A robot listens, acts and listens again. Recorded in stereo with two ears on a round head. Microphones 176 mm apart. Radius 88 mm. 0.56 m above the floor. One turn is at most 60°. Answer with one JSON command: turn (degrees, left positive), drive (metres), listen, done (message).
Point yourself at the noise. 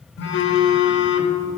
{"turn": 60}
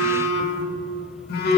{"turn": 55}
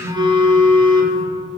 {"turn": -25}
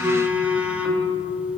{"done": "Facing the phone buzzing."}